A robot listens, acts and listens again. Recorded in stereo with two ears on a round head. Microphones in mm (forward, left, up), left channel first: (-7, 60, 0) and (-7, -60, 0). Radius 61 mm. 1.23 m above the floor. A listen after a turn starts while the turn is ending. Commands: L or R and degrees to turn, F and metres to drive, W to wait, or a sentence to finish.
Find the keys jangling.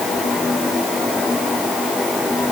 W
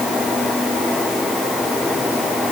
W
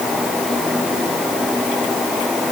I can't make out keys jangling.